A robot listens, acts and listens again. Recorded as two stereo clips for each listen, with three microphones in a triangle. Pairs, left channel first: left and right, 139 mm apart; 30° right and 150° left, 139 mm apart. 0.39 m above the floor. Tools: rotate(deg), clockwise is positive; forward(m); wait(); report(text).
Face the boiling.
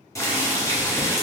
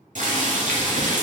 rotate(-155)
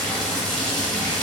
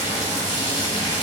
report("Found it: boiling, straight ahead.")